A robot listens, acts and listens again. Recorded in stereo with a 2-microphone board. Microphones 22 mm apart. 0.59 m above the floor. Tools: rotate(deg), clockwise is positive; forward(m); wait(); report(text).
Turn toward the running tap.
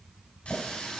rotate(-90)
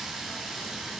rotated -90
rotate(10)
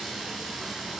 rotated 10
report("Facing the running tap.")